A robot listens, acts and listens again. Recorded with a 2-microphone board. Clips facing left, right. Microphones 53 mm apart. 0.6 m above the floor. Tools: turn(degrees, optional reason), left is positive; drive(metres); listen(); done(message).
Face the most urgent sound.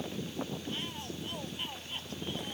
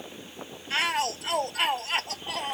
turn(degrees=-90)
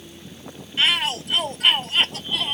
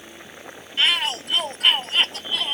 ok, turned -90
done("Facing the shout.")